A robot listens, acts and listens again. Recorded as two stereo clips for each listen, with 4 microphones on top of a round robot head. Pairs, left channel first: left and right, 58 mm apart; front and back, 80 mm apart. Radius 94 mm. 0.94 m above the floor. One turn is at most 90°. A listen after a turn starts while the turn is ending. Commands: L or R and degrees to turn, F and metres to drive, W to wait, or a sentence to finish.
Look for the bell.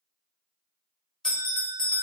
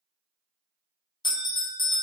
L10
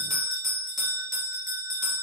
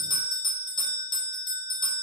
Facing the bell.